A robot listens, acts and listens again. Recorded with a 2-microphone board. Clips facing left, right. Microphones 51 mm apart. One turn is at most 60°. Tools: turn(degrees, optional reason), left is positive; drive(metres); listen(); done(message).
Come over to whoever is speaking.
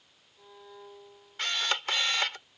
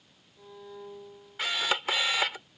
listen()
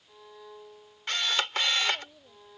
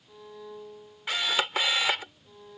turn(degrees=60)
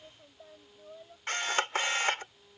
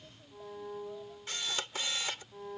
turn(degrees=30, reason="So it is at 30° left.")
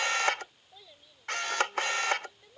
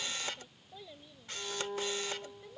drive(metres=1.0)
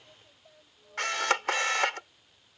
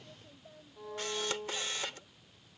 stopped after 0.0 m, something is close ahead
done("Something is in my way. I am facing the child speaking but have not reached it.")